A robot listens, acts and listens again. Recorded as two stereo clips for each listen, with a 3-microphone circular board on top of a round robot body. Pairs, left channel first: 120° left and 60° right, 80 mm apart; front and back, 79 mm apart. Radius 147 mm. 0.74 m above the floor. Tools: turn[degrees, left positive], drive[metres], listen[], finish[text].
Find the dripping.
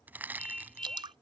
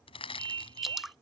Thought: The dripping: 90° right.
Action: turn[-90]
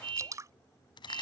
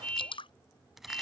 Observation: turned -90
Thought: The dripping is now 10° right.
Action: turn[-10]
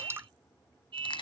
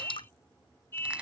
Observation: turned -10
Action: finish[Facing the dripping.]